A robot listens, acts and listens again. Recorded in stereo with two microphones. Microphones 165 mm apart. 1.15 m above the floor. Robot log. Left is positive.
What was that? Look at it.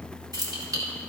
note: The keys jangling: about 20° right or 160° right.
cmd yaw -20
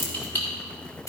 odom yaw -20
note: So it is at 20° left.
cmd yaw +20
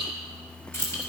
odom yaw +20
note: The keys jangling is now 15° left.
cmd yaw +15
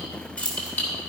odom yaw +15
note: The keys jangling is now 10° left.
cmd yaw +10
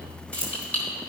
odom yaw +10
note: The keys jangling is now 10° left.
cmd yaw +10
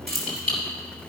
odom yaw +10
end: Facing the keys jangling.